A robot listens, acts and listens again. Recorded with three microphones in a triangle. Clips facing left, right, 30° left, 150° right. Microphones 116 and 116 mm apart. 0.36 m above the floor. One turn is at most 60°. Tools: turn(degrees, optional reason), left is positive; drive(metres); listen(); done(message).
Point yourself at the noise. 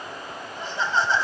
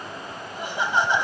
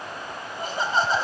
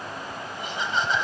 turn(degrees=-20, reason="The laughter: 20° right.")
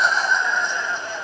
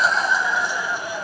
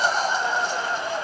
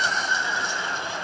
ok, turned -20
turn(degrees=-10, reason="The laughter is now 10° right.")
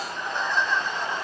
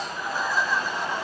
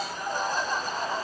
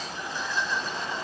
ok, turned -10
turn(degrees=-10, reason="The laughter is now 10° right.")
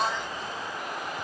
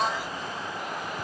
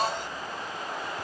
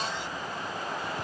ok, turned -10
done("Facing the laughter.")